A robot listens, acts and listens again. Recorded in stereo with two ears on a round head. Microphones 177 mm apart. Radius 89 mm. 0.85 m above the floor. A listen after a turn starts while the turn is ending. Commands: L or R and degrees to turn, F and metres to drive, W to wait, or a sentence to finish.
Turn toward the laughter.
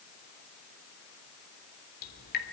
W
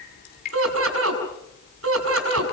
R70
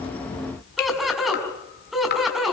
Facing the laughter.